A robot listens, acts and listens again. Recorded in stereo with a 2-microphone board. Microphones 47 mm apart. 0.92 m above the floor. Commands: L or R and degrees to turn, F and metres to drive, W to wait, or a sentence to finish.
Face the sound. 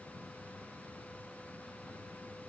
W
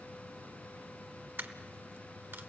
R55
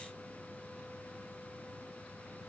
W
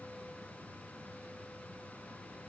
I heard a dropped coin, but can't make it out now. It was about straight ahead or 70° right.